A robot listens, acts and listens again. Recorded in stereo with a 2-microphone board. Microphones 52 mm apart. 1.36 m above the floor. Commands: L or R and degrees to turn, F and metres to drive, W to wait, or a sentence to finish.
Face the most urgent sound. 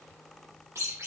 W
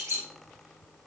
W
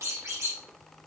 I can't make out anything urgent to turn to.